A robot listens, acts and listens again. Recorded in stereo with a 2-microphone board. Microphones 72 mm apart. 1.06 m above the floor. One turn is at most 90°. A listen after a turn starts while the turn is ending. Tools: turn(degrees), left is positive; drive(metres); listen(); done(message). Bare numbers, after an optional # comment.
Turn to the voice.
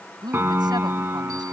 turn(-90)
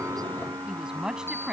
# So it is at 10° right.
turn(-10)
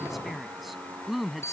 done("Found it: a woman speaking, straight ahead.")